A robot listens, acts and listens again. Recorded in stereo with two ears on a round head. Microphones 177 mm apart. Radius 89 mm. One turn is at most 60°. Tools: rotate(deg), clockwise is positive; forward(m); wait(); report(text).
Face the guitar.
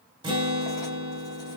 rotate(25)
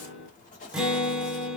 report("Facing the guitar.")